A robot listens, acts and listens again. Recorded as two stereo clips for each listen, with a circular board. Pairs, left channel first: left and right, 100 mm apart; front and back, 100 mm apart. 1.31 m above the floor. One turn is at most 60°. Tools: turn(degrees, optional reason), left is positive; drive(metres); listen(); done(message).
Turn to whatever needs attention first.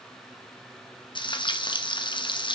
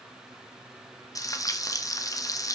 listen()
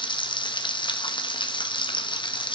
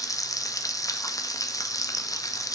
listen()
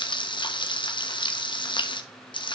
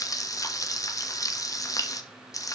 done("I can't make out anything urgent to turn to.")